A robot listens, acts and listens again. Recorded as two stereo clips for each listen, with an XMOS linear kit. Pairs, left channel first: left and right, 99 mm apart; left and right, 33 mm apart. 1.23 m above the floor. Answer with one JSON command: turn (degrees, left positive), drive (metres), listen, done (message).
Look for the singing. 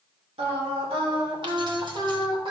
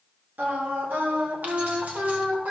{"turn": -60}
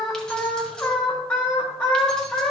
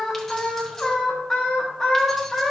{"turn": 15}
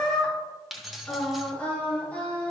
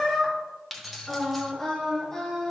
{"turn": 15}
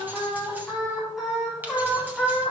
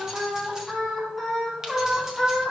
{"done": "Found it: singing, straight ahead."}